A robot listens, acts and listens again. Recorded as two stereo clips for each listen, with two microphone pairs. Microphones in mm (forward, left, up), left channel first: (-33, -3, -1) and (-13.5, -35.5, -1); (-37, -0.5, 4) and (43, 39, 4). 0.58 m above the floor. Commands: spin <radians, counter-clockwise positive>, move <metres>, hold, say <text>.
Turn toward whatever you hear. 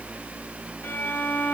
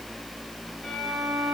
spin 2.01
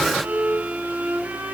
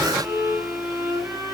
spin -0.79
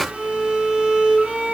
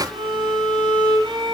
say Found it: a violin, straight ahead, 2 to 4 m away.